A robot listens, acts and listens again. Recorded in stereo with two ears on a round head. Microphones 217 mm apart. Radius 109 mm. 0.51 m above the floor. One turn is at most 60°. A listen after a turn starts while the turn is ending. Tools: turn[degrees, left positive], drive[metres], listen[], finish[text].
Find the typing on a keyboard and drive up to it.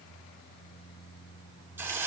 Action: listen[]
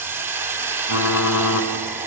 Thought: The typing on a keyboard: about 70° left or 110° left.
Action: turn[60]
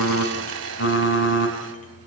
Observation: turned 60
Thought: So it is at 45° left.
Action: turn[45]
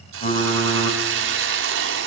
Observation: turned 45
Thought: The typing on a keyboard is now 10° left.
Action: turn[10]
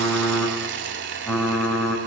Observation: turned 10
Action: drive[1.0]
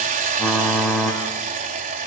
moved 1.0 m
Action: drive[1.0]
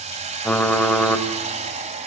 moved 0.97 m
Action: drive[1.0]
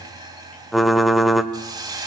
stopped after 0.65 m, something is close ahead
Action: finish[I am next to the typing on a keyboard.]